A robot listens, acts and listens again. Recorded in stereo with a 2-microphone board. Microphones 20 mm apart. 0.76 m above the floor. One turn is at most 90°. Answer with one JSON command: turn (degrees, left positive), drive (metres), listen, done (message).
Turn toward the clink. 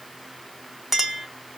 {"turn": -15}
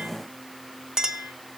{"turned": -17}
{"turn": -90}
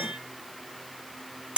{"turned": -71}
{"turn": -75}
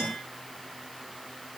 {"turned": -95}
{"turn": 20}
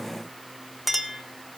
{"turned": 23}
{"done": "Facing the clink, 1 to 2 m away."}